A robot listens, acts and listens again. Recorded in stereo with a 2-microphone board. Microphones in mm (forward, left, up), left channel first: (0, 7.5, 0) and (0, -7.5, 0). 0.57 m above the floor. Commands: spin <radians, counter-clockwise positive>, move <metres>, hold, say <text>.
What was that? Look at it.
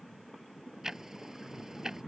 spin -0.61
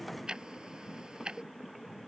spin -1.92
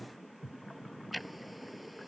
say Found it: ticking, straight ahead.